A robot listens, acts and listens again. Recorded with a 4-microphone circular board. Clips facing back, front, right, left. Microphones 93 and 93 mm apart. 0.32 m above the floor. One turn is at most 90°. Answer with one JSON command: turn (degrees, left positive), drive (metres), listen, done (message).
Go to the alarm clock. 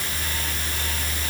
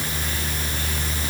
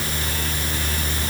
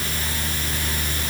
{"listen": true}
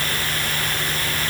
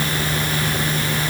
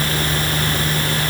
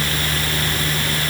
{"listen": true}
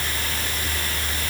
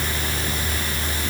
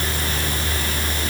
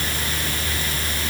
{"done": "I can't make out an alarm clock."}